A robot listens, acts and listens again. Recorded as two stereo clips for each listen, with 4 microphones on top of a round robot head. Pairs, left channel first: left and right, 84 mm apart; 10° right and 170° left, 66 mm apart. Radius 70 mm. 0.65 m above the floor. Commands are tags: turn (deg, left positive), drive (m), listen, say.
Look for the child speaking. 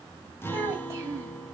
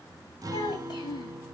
<turn deg="-30"/>
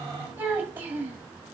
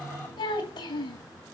<turn deg="-20"/>
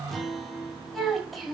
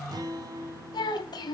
<say>Facing the child speaking, 2 to 4 m away.</say>